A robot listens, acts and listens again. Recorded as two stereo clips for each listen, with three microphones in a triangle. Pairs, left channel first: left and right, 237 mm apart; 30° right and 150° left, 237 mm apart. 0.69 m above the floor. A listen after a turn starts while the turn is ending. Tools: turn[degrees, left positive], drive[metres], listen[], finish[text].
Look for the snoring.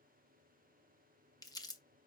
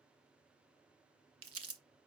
Action: listen[]
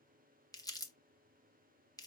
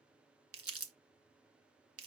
Action: listen[]
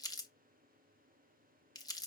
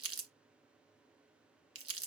Action: finish[I can't make out snoring, only crumpling.]